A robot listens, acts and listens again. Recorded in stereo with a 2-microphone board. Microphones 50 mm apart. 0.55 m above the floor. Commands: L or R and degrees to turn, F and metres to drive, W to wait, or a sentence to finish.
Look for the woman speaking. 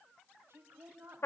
R50
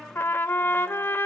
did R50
W
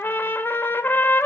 W
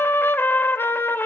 I heard a woman speaking, but can't make it out now. It was about straight ahead or 80° right.